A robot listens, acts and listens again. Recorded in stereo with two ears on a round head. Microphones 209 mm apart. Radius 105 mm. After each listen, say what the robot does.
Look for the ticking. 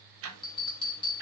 Turn 65° right.
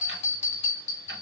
Keep listening.
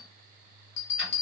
Keep listening.
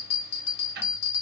Turn 45° right.
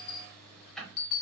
Facing the ticking, under 1 m away.